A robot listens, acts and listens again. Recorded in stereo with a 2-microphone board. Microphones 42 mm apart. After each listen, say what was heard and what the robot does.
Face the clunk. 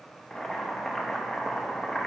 Keep listening.
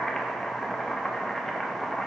Keep listening.
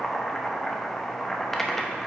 I can't make out a clunk to turn to.